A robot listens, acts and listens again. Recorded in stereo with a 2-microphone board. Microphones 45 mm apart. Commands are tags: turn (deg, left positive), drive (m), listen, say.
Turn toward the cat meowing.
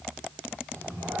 <turn deg="-90"/>
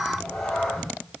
<turn deg="15"/>
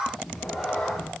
<say>Found it: a cat meowing, straight ahead.</say>